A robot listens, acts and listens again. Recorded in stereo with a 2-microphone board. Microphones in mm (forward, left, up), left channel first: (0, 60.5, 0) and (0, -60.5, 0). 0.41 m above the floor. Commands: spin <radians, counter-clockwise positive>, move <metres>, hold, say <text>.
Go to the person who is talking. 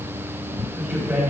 spin -0.52
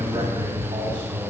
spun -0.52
spin -2.36
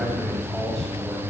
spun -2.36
move 1.0
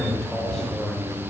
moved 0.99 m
move 1.0
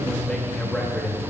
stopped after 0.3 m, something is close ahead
spin 0.26
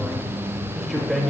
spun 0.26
say I am next to the man speaking.